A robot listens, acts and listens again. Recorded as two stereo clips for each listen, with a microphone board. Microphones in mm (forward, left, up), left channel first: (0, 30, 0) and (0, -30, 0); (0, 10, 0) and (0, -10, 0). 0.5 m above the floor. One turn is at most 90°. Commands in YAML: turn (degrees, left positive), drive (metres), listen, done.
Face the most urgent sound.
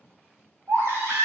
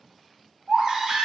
turn: -45
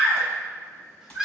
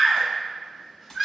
turn: -10
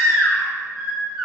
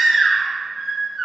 done: "Facing the baby crying, under 1 m away."